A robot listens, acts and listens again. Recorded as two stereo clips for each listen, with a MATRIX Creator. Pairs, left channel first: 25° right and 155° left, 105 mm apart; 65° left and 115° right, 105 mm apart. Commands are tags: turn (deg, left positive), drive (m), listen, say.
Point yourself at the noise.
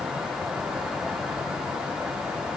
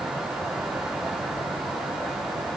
<listen/>
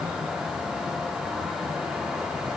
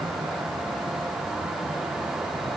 <listen/>
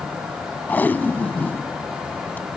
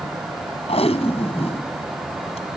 <turn deg="50"/>
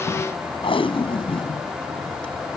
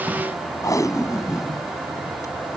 <turn deg="10"/>
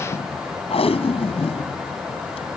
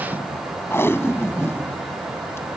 <say>Found it: tape being pulled, straight ahead.</say>